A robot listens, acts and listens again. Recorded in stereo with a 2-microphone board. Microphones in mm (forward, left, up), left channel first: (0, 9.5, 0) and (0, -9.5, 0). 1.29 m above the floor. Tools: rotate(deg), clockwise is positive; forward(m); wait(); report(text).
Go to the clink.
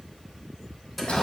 wait()
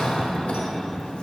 wait()
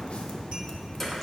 report("I can't make out a clink to turn to.")